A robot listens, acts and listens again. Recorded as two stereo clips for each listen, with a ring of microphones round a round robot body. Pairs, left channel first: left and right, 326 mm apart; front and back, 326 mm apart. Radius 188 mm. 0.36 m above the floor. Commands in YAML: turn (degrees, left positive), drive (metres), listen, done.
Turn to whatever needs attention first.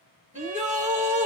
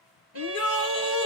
turn: -25
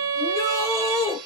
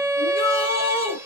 turn: 10
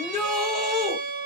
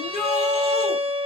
done: "Facing the shout."